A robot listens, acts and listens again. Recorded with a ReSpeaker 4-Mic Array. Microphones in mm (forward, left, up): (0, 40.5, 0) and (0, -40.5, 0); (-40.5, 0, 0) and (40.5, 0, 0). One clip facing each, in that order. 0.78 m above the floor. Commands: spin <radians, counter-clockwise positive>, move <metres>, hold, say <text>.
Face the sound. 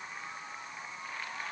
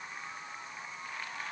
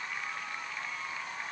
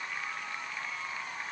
hold
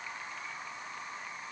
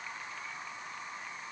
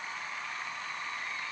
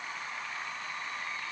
hold
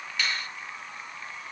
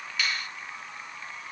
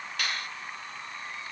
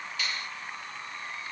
spin -3.05
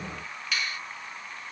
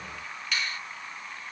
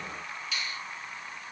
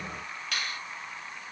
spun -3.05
say Found it: a finger snap, straight ahead, 1 to 2 m away.